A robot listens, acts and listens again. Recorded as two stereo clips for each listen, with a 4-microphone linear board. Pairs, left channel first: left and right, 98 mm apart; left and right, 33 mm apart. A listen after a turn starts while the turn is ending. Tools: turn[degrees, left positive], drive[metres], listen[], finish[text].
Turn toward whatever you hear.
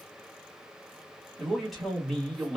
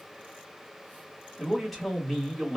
Action: turn[30]
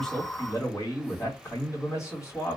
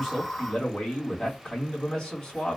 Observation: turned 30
Thought: So it is at 150° left.
Action: turn[150]
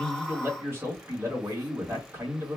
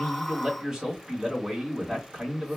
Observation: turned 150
Thought: The man speaking is now 25° right.
Action: turn[-25]
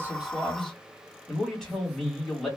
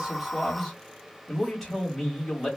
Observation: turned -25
Action: finish[Facing the man speaking, 1 to 2 m away.]